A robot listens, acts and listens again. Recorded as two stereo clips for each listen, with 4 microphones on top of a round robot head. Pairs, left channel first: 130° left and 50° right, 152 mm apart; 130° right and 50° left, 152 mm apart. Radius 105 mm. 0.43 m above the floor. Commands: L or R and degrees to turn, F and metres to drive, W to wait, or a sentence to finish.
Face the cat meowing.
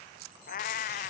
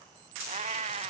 L100
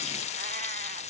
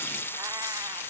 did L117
R20
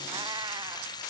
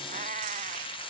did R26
L10
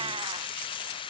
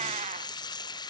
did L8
W
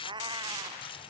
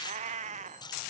L10
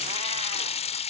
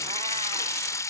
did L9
W
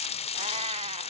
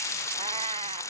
W
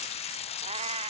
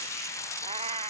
Facing the cat meowing.